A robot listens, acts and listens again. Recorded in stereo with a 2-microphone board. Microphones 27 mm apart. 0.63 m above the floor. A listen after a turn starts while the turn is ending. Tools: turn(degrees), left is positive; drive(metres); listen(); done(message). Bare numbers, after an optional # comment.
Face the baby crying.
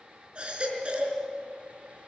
# The baby crying: about 40° right or 140° right.
turn(-40)
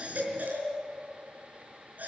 # So it is at 100° right.
turn(-100)
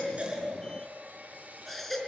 done("Found it: a baby crying, straight ahead.")